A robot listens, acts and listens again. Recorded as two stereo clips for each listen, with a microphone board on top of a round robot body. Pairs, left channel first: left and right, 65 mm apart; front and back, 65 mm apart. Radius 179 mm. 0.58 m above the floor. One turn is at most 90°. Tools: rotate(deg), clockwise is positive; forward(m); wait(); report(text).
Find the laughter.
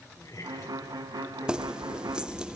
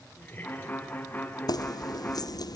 rotate(-60)
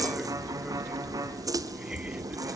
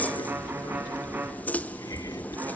wait()
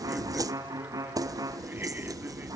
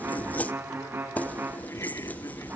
wait()
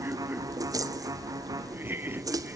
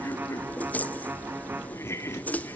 rotate(35)
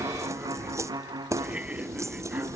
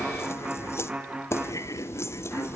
rotate(20)
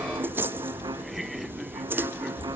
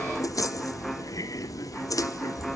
report("Facing the laughter.")